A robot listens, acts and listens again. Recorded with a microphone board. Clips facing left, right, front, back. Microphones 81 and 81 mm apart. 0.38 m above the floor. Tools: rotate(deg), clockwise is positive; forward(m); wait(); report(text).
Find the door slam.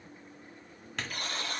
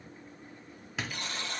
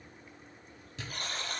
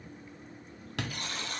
rotate(175)
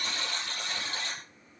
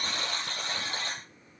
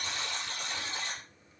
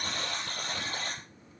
report("I heard a door slam from this way, but can't make it out now.")